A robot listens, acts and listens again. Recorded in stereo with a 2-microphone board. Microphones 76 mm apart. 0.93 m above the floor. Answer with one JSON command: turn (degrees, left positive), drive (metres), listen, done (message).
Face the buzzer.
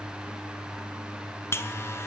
{"turn": 35}
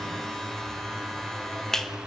{"done": "Found it: a buzzer, straight ahead, 1 to 2 m away."}